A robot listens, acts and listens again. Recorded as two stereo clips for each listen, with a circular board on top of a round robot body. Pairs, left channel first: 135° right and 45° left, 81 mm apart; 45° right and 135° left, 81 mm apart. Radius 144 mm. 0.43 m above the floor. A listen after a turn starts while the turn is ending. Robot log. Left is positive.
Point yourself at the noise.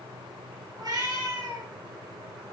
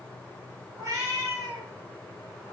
note: The cat meowing: 85° left.
cmd yaw +85
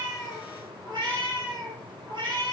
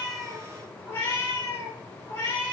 note: The cat meowing is now 20° left.
cmd yaw +20
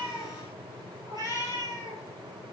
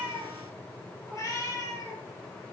end: Facing the cat meowing, over 4 m away.